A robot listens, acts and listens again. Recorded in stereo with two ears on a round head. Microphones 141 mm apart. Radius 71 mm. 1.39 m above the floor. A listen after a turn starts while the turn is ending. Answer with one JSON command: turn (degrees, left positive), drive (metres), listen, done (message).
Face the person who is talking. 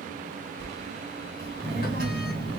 {"turn": -60}
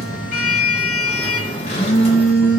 {"turn": -15}
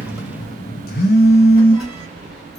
{"done": "Found it: a child speaking, straight ahead."}